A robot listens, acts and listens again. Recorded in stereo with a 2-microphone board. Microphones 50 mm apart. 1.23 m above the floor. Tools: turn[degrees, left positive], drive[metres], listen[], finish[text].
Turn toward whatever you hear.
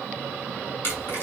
Thought: The hiss: about 50° left or 130° left.
Action: turn[50]
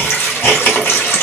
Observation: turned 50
Thought: So it is at 65° left.
Action: turn[65]
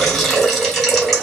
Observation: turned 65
Action: finish[Found it: a hiss, straight ahead, 1 to 2 m away.]